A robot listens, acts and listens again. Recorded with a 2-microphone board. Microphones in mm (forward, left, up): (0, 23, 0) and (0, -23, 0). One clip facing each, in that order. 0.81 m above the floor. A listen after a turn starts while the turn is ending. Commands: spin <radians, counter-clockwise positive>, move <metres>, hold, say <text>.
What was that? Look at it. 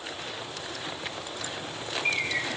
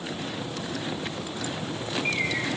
spin -0.52
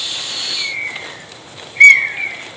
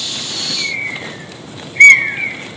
spin -2.53
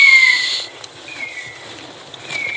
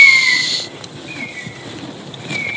spin 0.26
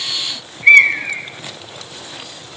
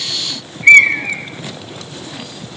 say Facing the bird, 1 to 2 m away.